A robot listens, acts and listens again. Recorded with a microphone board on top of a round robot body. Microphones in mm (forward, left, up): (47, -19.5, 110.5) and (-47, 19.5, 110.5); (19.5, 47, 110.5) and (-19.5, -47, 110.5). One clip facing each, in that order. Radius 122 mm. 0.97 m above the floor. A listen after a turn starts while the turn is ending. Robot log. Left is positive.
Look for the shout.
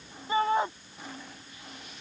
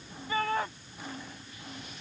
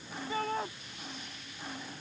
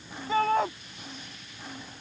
note: The shout: 95° right.
cmd yaw -95
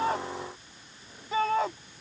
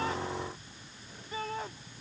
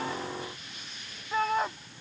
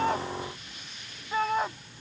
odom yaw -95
note: The shout is now 25° right.
cmd yaw -25
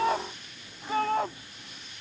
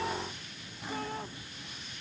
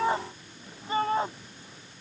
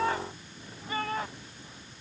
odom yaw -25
end: Facing the shout.